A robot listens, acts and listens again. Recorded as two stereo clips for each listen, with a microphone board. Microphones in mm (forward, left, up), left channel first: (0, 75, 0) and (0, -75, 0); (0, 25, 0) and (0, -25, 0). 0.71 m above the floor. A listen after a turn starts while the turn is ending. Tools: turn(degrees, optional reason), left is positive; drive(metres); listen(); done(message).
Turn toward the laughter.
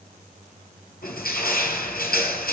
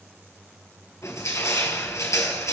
listen()
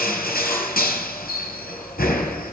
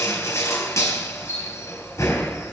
listen()
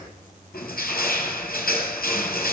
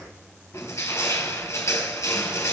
done("I can't make out laughter to turn to.")